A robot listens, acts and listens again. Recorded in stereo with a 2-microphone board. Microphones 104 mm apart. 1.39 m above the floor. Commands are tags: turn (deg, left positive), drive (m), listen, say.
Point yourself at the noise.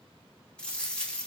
<turn deg="30"/>
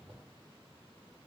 <listen/>
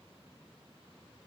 <say>I heard a dropped coin, but can't make it out now. It was about 20° right or 140° left.</say>